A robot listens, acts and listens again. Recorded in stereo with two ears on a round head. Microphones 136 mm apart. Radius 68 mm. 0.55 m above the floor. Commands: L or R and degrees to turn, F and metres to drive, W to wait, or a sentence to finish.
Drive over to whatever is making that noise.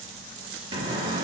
R30
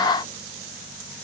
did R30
W
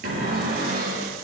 R120
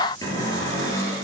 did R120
L25
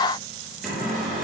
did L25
F1.0
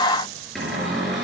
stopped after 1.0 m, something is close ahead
Blocked. The cupboard door is further on, straight ahead.